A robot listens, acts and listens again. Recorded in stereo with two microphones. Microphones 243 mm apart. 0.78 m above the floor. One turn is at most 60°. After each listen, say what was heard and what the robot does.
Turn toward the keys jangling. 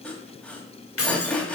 The keys jangling: about 70° left or 110° left. Turn 60° left.
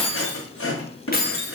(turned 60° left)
So it is at 45° left. Turn 45° left.
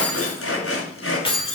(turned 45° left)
The keys jangling is now 25° left. Turn 25° left.
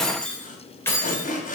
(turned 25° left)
The keys jangling is now 10° left. Turn 10° left.
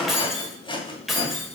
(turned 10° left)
Facing the keys jangling.